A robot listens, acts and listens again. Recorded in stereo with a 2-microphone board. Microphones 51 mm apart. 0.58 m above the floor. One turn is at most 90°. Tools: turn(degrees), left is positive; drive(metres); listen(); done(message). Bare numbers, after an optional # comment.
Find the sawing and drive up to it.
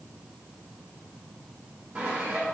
# The sawing: about 25° right or 155° right.
turn(-25)
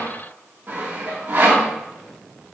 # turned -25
# So it is at 135° right.
turn(-90)
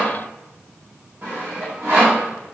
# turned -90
# The sawing is now 45° right.
turn(-45)
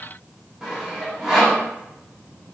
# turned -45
# The sawing is now 10° right.
turn(-10)
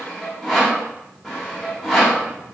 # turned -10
drive(1.0)
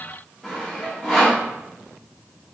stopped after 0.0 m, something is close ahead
done("Something is in my way. I am facing the sawing but have not reached it.")